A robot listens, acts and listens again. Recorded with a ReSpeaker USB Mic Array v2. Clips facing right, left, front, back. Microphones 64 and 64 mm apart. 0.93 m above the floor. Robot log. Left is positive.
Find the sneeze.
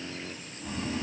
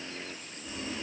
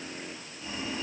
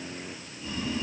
cmd idle
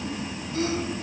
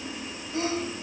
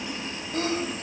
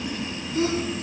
note: The sneeze: 30° left.
cmd yaw +30
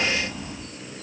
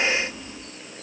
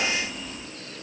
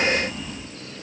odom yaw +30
end: Facing where the sneeze came from. I can't hear it now.